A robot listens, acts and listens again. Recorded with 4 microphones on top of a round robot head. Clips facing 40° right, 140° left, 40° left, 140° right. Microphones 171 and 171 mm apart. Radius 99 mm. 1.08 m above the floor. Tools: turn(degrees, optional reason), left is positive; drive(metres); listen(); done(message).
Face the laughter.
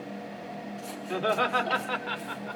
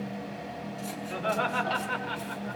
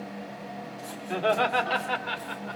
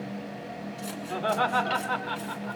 turn(degrees=-25, reason="The laughter: 25° right.")
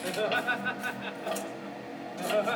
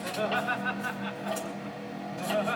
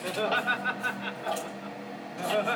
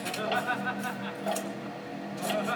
done("Found it: laughter, straight ahead.")